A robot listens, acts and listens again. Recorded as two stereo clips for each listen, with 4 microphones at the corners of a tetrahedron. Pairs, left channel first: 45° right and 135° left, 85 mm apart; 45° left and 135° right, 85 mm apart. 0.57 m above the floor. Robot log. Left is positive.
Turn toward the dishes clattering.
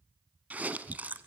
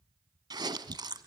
cmd idle
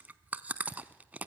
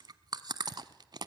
cmd idle
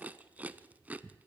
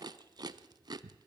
end: I can't make out dishes clattering, only chewing.